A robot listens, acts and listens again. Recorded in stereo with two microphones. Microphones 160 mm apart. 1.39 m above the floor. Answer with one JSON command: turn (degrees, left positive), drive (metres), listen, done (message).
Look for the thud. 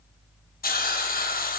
{"listen": true}
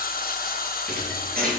{"turn": -65}
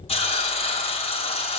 {"listen": true}
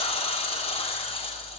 {"done": "I heard a thud, but can't make it out now. It was about straight ahead or 50° right."}